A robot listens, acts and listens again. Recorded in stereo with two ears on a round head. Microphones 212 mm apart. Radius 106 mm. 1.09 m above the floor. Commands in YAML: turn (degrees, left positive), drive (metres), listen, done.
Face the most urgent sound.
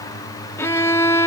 listen: true
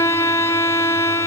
listen: true
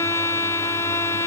done: "I can't make out anything urgent, only a violin."